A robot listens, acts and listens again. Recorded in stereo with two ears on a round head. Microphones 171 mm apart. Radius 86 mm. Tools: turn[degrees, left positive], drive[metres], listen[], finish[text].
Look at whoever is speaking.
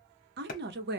Thought: The woman speaking: about 55° right or 125° right.
Action: turn[-55]
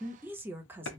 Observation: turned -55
Thought: So it is at 10° right.
Action: turn[-10]
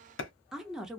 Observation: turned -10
Action: finish[Found it: a woman speaking, straight ahead, 1 to 2 m away.]